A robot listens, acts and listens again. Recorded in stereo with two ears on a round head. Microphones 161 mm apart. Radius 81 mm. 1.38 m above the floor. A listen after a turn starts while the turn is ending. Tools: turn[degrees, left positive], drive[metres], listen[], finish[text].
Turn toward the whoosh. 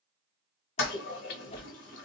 Thought: The whoosh: about 35° left or 145° left.
Action: turn[35]
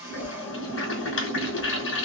Action: listen[]
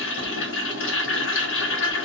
Action: listen[]
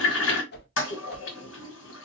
Thought: So it is at 110° left.
Action: turn[110]
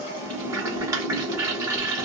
Action: listen[]
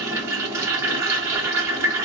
Action: listen[]
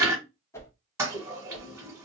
Thought: The whoosh is now 15° left.
Action: turn[15]
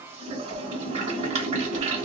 Action: listen[]
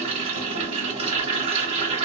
Action: listen[]
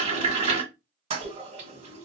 Action: finish[Facing where the whoosh came from. I can't hear it now.]